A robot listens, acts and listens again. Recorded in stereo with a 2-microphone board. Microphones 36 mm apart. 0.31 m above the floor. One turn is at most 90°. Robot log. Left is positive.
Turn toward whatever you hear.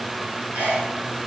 note: The sneeze: about 50° right or 130° right.
cmd yaw -50
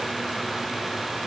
cmd idle
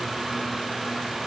end: I heard a sneeze, but can't make it out now. It was about straight ahead or 80° right.